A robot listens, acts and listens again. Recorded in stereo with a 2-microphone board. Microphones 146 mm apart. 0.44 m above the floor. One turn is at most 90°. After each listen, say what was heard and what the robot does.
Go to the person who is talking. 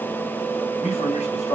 The man speaking: about 55° left or 125° left. Turn 55° left.
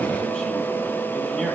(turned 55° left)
Keep listening.
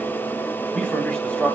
So it is at 10° left. Turn 10° left.
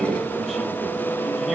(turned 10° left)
Keep listening.
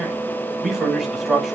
Drive 1.0 m forward.
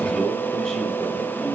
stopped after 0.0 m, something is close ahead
Blocked. The man speaking is further on, straight ahead.